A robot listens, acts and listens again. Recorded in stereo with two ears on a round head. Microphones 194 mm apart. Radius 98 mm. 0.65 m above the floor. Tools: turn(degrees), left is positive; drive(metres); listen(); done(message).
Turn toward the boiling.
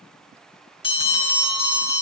listen()
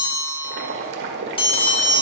turn(degrees=-50)
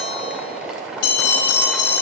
done("Facing the boiling, 1 to 2 m away.")